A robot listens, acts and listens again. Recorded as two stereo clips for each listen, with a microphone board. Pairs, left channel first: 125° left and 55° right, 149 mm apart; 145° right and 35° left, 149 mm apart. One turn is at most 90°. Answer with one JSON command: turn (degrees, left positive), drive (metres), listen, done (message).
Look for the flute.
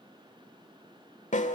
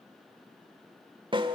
{"listen": true}
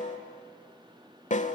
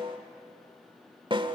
{"listen": true}
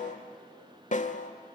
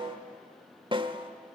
{"done": "I can't make out a flute to turn to."}